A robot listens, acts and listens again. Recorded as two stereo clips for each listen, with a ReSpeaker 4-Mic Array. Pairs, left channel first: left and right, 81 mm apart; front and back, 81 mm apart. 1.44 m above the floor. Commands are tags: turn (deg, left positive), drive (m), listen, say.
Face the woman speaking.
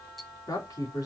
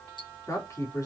<turn deg="50"/>
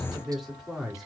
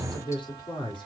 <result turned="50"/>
<say>Found it: a woman speaking, straight ahead.</say>